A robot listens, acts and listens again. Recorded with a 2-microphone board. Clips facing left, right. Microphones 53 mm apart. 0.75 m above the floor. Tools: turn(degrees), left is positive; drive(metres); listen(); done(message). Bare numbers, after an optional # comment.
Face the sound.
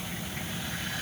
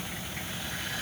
listen()
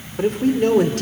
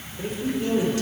# The man speaking: about 70° left or 110° left.
turn(70)
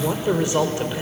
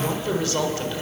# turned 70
# So it is at 20° left.
turn(20)
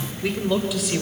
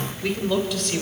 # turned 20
done("Facing the man speaking, 2 to 4 m away.")